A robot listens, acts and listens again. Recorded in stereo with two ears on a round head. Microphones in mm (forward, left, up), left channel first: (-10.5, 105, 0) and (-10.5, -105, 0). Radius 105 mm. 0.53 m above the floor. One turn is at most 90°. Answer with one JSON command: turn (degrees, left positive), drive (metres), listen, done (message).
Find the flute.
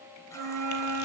{"turn": -70}
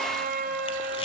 {"turn": -35}
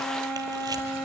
{"done": "Facing the flute, 1 to 2 m away."}